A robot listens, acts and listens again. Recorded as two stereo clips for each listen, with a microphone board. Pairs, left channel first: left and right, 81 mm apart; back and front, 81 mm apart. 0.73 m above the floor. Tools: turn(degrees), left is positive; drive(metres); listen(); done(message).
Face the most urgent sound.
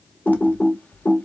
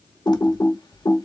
listen()
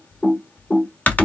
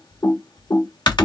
listen()
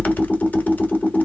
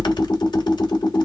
done("I can't make out anything urgent to turn to.")